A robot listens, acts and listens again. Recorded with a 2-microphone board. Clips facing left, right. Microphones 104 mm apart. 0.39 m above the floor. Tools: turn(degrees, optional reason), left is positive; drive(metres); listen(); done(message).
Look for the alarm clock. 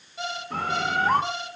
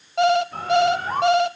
turn(degrees=-65, reason="The alarm clock: about 65° right or 115° right.")
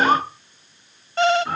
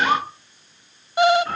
turn(degrees=-10, reason="So it is at 10° right.")
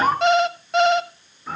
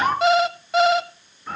done("Facing the alarm clock, 1 to 2 m away.")